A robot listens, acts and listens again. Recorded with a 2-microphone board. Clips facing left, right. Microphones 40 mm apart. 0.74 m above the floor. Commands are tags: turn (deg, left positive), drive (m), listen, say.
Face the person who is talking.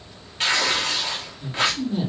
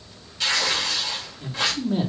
<turn deg="-20"/>
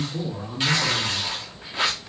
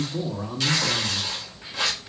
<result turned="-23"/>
<turn deg="-15"/>
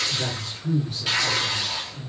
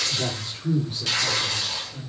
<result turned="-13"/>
<turn deg="-25"/>
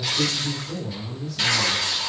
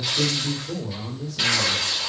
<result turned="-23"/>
<turn deg="-135"/>
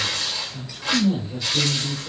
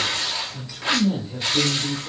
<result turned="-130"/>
<say>Found it: a man speaking, straight ahead.</say>